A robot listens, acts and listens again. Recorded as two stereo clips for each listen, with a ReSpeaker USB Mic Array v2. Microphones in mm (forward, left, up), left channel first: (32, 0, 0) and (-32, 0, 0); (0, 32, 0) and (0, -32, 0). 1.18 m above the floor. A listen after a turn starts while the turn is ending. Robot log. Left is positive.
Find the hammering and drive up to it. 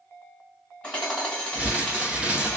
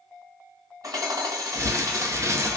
note: The hammering: 70° right.
cmd yaw -70
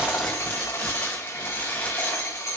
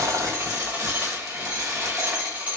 note: The hammering is now 20° right.
cmd yaw -20
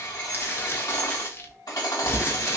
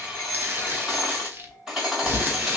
cmd fwd 1.0
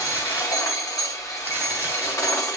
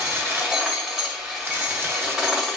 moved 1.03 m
cmd fwd 1.0
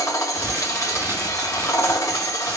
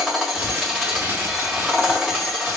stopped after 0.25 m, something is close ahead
end: Arrived at the hammering, straight ahead.